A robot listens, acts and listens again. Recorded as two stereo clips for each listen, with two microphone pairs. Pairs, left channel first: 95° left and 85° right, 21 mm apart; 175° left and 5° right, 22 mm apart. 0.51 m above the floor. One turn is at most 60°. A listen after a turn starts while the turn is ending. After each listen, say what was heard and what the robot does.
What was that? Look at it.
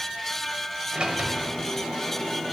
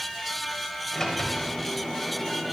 The sliding door: 115° right. Turn 60° right.
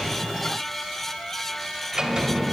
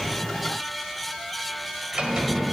The sliding door is now 35° right. Turn 35° right.
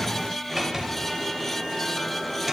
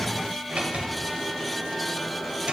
Found it: a sliding door, straight ahead, 1 to 2 m away.